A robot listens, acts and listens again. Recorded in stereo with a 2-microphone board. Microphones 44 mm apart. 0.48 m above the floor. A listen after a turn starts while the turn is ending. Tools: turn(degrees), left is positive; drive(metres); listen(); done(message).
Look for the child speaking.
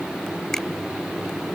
listen()
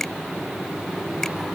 listen()
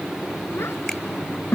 turn(degrees=65)
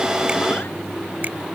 listen()
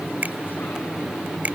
listen()
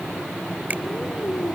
done("I heard a child speaking, but can't make it out now. It was about straight ahead or 50° left.")